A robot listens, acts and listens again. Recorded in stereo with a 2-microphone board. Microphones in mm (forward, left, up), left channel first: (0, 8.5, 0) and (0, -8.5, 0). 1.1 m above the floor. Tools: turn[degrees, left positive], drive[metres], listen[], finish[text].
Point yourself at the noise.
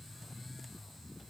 Action: listen[]
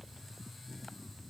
Action: listen[]
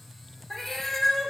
Action: turn[30]
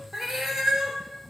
Thought: So it is at 40° right.
Action: turn[-40]
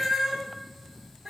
Thought: The cat meowing is now 35° right.
Action: turn[-35]
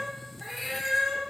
Action: finish[Found it: a cat meowing, straight ahead, 1 to 2 m away.]